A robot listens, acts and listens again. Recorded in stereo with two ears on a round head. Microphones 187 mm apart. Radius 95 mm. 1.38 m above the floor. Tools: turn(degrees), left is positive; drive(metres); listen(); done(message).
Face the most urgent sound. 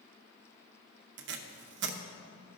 listen()
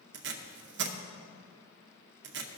listen()
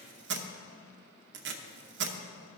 done("I can't make out anything urgent, only tape being pulled.")